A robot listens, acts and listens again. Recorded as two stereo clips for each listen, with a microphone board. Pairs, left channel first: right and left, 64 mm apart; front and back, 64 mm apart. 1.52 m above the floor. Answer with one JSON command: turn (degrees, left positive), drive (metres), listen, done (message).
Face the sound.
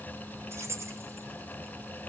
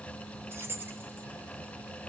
{"turn": 130}
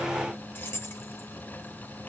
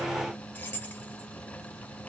{"turn": -55}
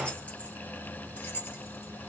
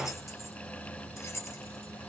{"turn": -40}
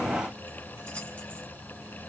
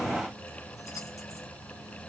{"listen": true}
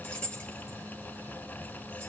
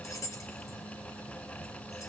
{"turn": -15}
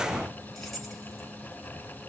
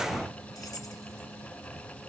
{"done": "Facing the keys jangling."}